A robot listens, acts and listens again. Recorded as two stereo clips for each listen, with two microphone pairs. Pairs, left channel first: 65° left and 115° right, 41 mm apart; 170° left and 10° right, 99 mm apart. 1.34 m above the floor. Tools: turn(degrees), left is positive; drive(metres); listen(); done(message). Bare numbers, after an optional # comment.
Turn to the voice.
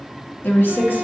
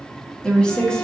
# The woman speaking: 90° left.
turn(90)
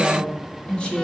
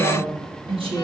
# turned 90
done("Found it: a woman speaking, straight ahead.")